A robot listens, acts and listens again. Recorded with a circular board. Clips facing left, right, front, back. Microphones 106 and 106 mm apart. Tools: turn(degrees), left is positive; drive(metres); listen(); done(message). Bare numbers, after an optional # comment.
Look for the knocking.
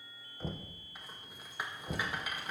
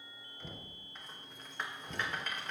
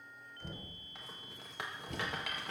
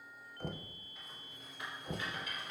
# The knocking: 140° left.
turn(140)
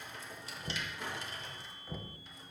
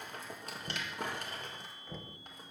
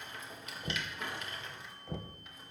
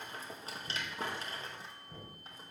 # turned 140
done("Facing the knocking.")